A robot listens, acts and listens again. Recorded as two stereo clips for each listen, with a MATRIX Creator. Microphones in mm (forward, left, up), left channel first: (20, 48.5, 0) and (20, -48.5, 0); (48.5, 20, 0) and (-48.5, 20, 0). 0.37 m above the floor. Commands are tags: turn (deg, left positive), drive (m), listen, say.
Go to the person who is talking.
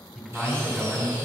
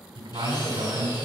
<turn deg="-170"/>
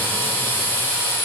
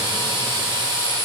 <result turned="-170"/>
<listen/>
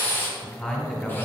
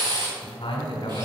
<turn deg="15"/>
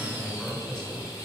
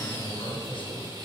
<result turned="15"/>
<drive m="1.0"/>
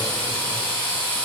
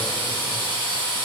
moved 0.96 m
<listen/>
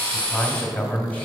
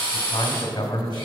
<turn deg="20"/>
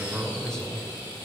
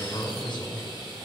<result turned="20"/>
<drive m="1.0"/>
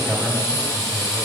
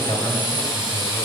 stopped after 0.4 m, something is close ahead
<say>I am next to the man speaking.</say>